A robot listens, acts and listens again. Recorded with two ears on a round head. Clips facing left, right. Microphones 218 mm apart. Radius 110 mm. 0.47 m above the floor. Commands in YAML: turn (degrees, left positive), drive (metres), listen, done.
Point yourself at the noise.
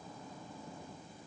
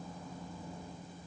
listen: true
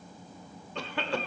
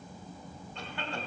turn: 60
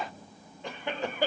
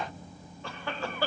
turn: 20
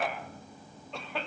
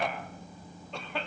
done: "Facing the cough."